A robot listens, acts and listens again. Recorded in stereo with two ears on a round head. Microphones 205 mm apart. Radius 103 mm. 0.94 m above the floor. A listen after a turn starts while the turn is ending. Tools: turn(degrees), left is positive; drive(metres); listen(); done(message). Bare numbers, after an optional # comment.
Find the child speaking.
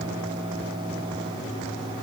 listen()
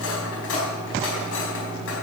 listen()
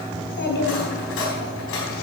# The child speaking: about 50° left or 130° left.
turn(50)
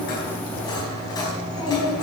# So it is at 20° left.
turn(20)
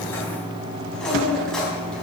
done("Found it: a child speaking, straight ahead.")